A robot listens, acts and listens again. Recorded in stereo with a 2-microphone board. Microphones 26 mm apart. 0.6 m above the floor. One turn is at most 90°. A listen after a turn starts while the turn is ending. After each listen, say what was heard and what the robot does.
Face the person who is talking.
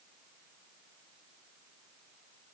Keep listening.
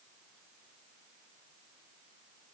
Keep listening.
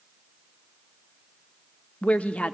The woman speaking: about 55° left or 125° left. Turn 55° left.
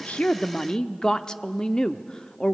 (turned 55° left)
So it is at 35° left. Turn 35° left.
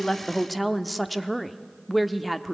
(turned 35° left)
Facing the woman speaking, under 1 m away.